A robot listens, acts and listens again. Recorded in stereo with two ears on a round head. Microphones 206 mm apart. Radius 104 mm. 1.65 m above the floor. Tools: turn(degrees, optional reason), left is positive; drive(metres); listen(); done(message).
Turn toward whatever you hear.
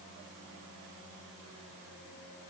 listen()
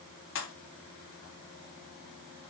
turn(degrees=55, reason="The pop: about 55° left or 125° left.")
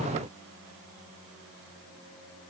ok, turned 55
listen()
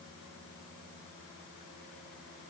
done("I heard a pop, but can't make it out now. It was about straight ahead or 70° left.")